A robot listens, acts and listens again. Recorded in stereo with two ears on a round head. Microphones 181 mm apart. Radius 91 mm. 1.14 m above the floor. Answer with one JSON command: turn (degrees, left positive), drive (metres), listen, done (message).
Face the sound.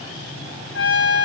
{"turn": 60}
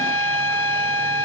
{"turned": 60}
{"turn": 15}
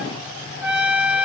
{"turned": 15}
{"done": "Facing the trumpet, 2 to 4 m away."}